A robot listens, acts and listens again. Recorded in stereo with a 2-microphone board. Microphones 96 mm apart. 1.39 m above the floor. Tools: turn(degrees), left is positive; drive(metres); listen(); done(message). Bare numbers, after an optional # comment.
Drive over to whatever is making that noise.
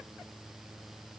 listen()
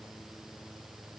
listen()
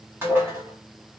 # The dishes clattering: about 25° right or 155° right.
turn(-25)
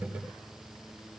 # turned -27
listen()
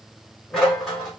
drive(1.0)
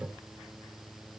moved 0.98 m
listen()
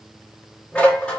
# The dishes clattering is now 15° left.
turn(15)
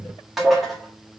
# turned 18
drive(1.0)
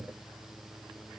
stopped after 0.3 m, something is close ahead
listen()
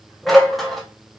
done("I am next to the dishes clattering.")